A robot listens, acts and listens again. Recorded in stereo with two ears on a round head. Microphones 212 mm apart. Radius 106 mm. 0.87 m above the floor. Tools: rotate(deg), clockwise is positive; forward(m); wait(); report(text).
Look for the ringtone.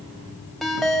rotate(-30)
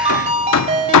rotate(30)
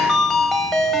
report("Facing the ringtone, 2 to 4 m away.")